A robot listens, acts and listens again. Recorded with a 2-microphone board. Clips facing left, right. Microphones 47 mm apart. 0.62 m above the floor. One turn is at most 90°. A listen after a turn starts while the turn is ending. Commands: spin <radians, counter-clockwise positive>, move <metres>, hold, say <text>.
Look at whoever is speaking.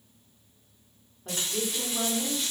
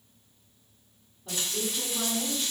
spin 0.87
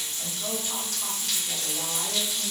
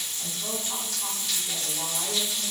hold
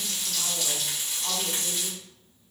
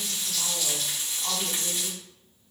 hold
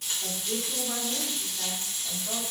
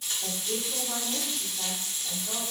spin 0.26
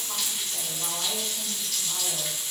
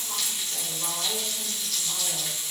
hold
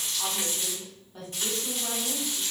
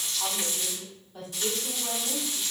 say Facing the woman speaking.